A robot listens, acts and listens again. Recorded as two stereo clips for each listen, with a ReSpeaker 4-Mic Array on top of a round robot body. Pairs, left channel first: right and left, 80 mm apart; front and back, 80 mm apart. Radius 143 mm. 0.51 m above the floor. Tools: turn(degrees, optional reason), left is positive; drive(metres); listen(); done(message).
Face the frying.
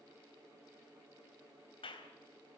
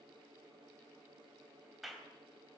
listen()
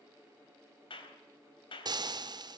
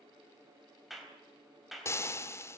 turn(degrees=55, reason="The frying: 55° left.")
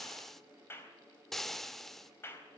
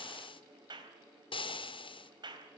done("Found it: frying, straight ahead, 1 to 2 m away.")